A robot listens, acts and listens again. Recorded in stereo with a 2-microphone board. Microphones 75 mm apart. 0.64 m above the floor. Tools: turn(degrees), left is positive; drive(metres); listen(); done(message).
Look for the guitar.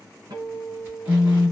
turn(degrees=-65)
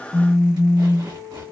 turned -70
turn(degrees=-45)
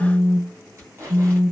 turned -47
listen()
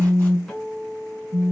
done("Facing the guitar.")